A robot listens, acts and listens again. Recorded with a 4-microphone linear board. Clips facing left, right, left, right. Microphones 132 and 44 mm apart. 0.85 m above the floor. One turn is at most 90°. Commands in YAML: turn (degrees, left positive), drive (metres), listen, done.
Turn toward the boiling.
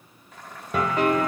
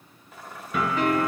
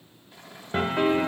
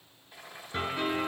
turn: -30
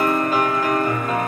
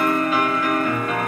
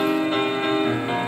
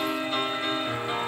listen: true
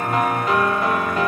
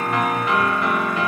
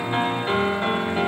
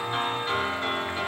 listen: true
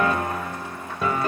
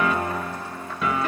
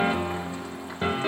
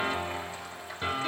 done: "I heard boiling, but can't make it out now. It was about 25° left or 145° right."